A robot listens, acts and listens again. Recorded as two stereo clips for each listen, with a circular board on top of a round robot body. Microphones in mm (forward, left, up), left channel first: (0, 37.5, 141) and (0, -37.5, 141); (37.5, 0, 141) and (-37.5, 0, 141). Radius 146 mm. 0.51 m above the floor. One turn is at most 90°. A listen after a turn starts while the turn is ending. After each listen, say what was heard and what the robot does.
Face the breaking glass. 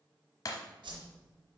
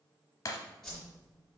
The breaking glass: 45° left. Turn 45° left.
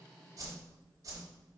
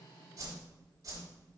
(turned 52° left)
I heard breaking glass from this way, but can't make it out now.